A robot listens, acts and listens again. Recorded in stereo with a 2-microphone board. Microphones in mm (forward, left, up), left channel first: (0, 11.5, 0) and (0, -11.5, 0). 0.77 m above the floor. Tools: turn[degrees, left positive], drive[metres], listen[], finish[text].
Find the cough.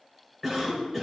Action: turn[30]
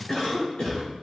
Thought: So it is at 145° left.
Action: turn[145]
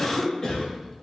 Thought: The cough is now 30° left.
Action: turn[30]
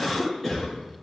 Action: finish[Found it: a cough, straight ahead.]